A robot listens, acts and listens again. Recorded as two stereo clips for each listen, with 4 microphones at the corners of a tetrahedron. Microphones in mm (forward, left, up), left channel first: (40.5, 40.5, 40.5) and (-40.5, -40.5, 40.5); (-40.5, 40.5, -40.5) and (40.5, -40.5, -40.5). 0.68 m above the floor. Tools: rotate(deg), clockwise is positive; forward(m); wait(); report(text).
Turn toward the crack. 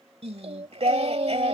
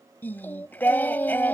wait()
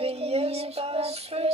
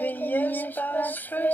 wait()
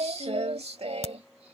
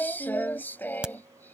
rotate(-35)
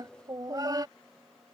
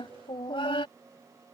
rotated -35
report("Facing where the crack came from. I can't hear it now.")